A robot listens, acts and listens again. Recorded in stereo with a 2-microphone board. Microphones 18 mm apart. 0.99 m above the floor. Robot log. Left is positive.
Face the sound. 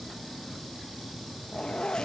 note: The zipper: about 55° left or 125° left.
cmd yaw +55
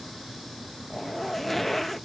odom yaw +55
note: So it is at 10° left.
cmd yaw +10
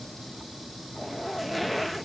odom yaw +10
end: Found it: a zipper, straight ahead.